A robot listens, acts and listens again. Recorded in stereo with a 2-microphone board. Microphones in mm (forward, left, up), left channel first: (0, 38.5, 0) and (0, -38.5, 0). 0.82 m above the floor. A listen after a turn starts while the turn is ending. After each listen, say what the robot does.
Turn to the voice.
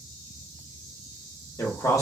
Turn 45° left.
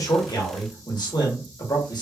Turn 85° left.
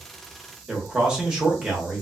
Turn 10° right.
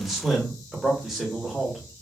Facing the man speaking, 1 to 2 m away.